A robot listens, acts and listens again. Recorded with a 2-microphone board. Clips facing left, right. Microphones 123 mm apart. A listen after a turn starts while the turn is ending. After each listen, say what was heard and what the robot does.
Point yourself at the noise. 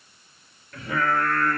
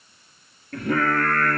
The singing: about 65° right or 115° right. Turn 65° right.
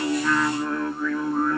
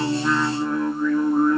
So it is at 15° right. Turn 15° right.
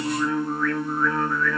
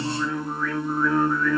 The singing is now 20° right. Turn 20° right.
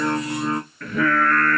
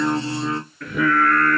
The singing is now 10° right. Turn 10° right.
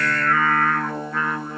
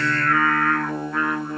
Facing the singing.